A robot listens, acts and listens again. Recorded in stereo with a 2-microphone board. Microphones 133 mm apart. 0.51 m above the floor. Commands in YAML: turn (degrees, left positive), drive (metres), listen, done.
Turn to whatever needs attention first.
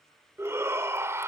turn: -20
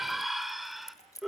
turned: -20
done: "Facing the shout."